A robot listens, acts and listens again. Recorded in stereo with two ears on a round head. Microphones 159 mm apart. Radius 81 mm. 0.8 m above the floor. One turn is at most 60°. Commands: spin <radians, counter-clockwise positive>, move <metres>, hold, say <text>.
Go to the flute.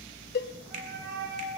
spin -1.05
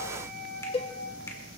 spin -0.96
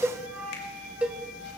spin -0.17
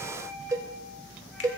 hold
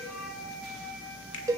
move 1.0
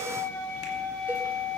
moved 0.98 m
spin 0.17
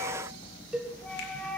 move 1.0
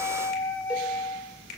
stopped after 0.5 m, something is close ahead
spin 0.17
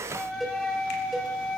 say I am next to the flute.